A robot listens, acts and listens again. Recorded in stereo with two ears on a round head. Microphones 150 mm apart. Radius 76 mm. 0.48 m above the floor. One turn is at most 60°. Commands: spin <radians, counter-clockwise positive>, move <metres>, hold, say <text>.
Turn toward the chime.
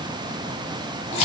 hold
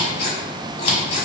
hold
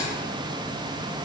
say I can't make out a chime to turn to.